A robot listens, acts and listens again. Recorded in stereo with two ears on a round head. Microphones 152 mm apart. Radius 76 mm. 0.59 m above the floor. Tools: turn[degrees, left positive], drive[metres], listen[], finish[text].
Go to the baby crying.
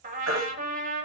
Action: turn[-90]
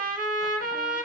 Action: listen[]
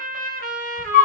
Action: drive[1.0]
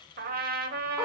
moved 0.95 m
Action: listen[]
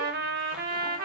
Action: listen[]
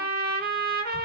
Action: finish[I heard a baby crying from this way, but can't make it out now. I did not reach it.]